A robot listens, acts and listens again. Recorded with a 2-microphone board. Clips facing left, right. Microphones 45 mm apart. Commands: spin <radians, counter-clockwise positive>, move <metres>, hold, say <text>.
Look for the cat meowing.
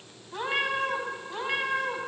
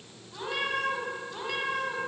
spin 0.35
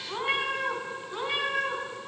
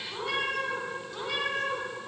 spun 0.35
spin 0.35
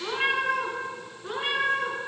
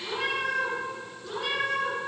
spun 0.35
spin 0.44
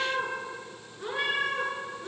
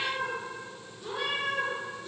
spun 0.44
spin 2.27
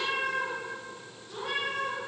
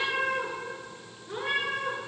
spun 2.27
spin -0.79
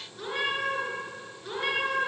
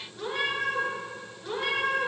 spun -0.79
say Facing the cat meowing.